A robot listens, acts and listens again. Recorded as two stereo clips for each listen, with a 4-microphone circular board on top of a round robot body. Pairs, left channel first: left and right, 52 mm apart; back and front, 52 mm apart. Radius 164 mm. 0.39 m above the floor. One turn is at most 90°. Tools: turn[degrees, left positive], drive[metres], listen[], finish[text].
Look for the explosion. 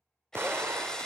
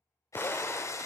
Thought: The explosion: 135° right.
Action: turn[-90]
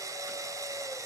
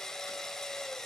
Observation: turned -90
Thought: Nothing new. It was at 45° right.
Action: turn[-45]
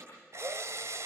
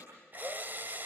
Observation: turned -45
Action: finish[Facing where the explosion came from. I can't hear it now.]